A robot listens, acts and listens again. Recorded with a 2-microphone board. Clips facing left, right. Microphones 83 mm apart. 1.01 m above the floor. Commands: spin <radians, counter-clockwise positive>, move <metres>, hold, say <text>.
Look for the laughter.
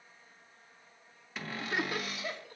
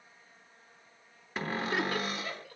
spin 0.52
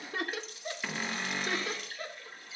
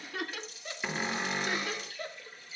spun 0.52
spin 2.62
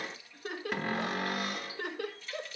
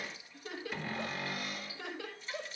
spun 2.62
spin 1.22
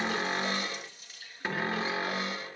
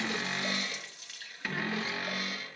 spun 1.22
hold
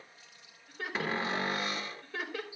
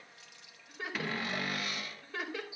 say Facing the laughter, over 4 m away.